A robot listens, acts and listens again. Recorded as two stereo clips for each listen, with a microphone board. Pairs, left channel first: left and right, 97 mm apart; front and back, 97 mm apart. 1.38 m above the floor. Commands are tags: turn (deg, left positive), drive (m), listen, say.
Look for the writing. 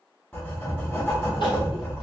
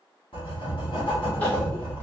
<turn deg="25"/>
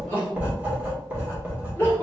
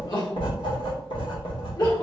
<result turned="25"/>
<turn deg="-20"/>
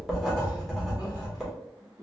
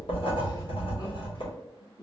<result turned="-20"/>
<say>Found it: writing, straight ahead.</say>